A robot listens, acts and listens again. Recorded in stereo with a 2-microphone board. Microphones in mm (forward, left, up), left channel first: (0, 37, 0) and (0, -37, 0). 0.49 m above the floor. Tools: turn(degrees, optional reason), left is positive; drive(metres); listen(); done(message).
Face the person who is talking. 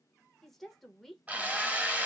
turn(degrees=30)
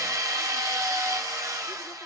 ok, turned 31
listen()
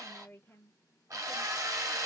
turn(degrees=140, reason="So it is at 140° left.")
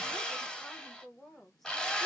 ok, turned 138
done("Facing the woman speaking.")